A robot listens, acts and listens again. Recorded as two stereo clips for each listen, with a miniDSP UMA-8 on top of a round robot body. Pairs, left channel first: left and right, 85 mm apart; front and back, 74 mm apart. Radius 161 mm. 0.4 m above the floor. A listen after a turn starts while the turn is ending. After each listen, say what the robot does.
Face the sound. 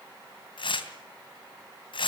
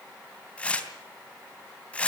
Turn 75° left.
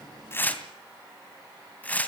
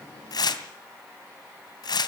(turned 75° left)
Turn 15° left.
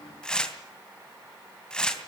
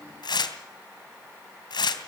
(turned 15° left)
Turn 10° left.
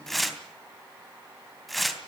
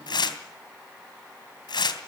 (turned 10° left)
Facing the tearing paper.